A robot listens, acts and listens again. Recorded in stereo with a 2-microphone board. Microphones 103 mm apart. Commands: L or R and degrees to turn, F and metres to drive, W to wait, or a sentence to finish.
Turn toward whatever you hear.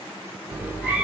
R30
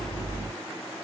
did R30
R150
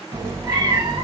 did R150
R45
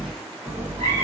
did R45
R20
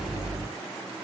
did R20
Found it: a cat meowing, straight ahead, 1 to 2 m away.